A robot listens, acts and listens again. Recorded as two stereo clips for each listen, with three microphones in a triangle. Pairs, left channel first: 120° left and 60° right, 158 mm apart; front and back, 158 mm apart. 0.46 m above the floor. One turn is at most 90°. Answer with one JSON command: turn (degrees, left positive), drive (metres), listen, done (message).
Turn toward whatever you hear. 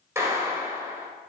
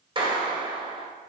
{"turn": -90}
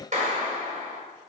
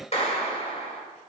{"turn": -35}
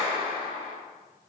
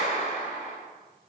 {"turn": -20}
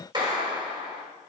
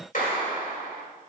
{"done": "Found it: a clap, straight ahead, 1 to 2 m away."}